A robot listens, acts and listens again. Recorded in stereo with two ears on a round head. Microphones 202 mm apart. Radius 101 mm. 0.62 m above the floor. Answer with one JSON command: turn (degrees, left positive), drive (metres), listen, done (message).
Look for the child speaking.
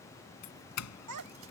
{"turn": -90}
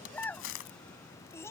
{"turn": 10}
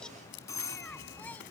{"done": "Found it: a child speaking, straight ahead."}